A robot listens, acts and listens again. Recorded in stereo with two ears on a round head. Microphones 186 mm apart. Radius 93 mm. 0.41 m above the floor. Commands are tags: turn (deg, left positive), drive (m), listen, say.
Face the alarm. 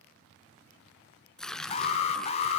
<turn deg="30"/>
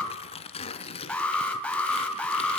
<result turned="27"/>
<say>Facing the alarm, 1 to 2 m away.</say>